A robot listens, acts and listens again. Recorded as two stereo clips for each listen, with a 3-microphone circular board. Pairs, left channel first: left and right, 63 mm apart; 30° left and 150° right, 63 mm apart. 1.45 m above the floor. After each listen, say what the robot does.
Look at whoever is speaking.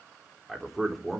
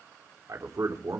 Turn 180° left.
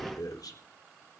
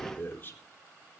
Turn 85° left.
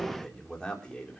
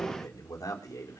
Turn 15° left.
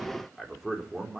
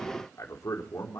Found it: a man speaking, straight ahead.